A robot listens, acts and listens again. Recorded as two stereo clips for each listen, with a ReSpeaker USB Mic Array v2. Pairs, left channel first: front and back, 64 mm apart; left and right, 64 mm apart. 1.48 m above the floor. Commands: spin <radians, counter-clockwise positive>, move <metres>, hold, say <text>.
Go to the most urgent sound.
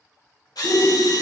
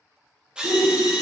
spin -0.96
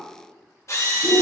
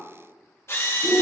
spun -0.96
move 1.0
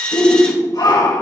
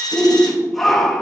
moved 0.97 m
move 1.0
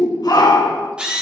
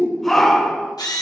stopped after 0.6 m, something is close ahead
say I am next to the shout.